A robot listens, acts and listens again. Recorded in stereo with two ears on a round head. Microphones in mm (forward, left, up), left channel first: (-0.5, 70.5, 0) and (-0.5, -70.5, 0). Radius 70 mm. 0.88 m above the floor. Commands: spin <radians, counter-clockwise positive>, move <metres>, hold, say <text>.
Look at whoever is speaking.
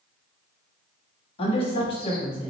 spin 0.61
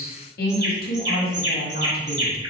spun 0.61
spin 1.92
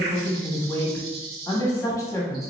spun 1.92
spin 0.35
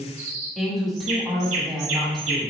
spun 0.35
say Found it: a woman speaking, straight ahead, 1 to 2 m away.